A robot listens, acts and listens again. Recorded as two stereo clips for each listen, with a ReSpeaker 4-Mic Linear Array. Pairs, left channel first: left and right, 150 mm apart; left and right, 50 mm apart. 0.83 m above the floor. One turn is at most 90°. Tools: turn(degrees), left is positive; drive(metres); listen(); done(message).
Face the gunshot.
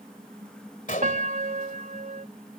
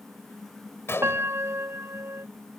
turn(degrees=60)
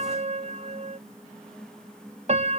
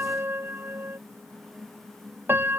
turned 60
listen()
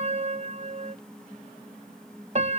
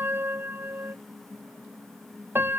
done("I heard a gunshot, but can't make it out now. It was about straight ahead or 60° left.")